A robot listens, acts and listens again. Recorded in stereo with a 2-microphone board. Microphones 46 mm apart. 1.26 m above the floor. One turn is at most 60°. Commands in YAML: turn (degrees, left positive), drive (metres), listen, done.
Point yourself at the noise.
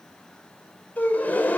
turn: 40
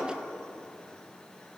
turn: 60
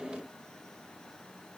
turn: 35
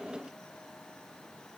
done: "Facing where the gasp came from. I can't hear it now."